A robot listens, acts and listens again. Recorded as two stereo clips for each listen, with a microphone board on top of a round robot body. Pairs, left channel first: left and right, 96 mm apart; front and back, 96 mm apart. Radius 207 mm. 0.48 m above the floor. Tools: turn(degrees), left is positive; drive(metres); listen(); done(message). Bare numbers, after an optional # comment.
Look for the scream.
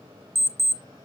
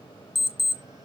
listen()
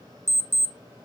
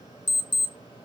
listen()
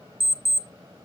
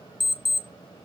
done("I can't make out a scream, only an alarm clock.")